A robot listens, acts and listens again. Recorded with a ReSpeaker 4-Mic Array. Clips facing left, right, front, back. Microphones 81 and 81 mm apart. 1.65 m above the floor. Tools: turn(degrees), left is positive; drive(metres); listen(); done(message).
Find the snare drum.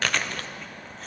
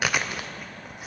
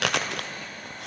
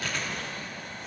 listen()
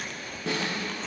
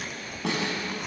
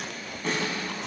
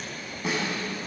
turn(degrees=-95)
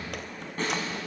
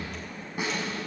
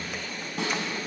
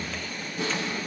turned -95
turn(degrees=-10)
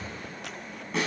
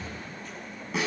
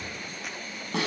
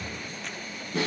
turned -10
done("Facing the snare drum, over 4 m away.")